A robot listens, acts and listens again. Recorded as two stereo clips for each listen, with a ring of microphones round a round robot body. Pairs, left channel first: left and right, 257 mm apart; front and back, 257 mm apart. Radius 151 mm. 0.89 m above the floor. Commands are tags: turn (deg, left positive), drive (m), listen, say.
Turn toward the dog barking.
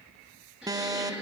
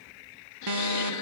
<listen/>
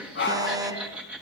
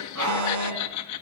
<turn deg="135"/>
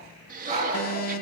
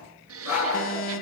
<turn deg="-20"/>
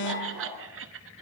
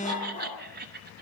<listen/>
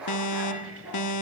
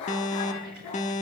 <say>Facing the dog barking, over 4 m away.</say>